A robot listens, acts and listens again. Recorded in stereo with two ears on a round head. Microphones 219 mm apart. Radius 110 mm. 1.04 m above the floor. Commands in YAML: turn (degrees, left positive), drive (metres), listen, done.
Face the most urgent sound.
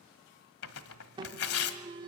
turn: -20
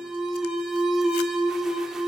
done: "Found it: an alarm, straight ahead."